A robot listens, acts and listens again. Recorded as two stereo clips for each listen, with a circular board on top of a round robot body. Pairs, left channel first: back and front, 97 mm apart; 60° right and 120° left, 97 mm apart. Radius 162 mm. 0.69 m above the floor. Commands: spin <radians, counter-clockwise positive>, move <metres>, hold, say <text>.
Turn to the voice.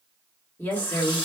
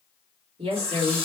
spin 1.92
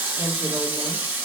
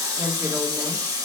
hold
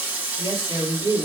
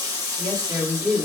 spin 0.61
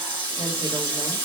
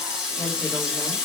hold
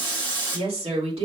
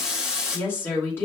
say Found it: a woman speaking, straight ahead, 2 to 4 m away.